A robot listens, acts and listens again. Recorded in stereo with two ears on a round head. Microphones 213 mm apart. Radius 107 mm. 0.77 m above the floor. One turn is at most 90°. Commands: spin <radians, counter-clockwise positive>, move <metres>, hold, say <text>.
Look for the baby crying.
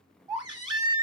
spin -0.35
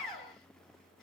say Facing the baby crying, 1 to 2 m away.